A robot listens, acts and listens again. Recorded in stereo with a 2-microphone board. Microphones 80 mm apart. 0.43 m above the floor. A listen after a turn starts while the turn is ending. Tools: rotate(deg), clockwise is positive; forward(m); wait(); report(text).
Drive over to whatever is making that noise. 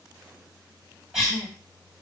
rotate(30)
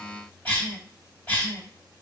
rotate(-25)
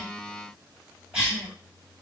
rotate(15)
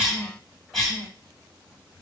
forward(1.0)
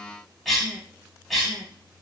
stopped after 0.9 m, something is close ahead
rotate(-10)
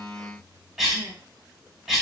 report("Arrived at the cough, straight ahead.")